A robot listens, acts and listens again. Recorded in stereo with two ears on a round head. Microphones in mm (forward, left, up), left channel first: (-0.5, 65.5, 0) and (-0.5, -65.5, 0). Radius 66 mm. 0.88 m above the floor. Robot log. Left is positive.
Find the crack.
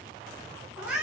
cmd idle
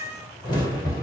note: The crack: about 30° left or 150° left.
cmd yaw +30
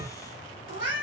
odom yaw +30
cmd idle
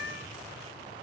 end: I heard a crack, but can't make it out now. It was about straight ahead or 120° left.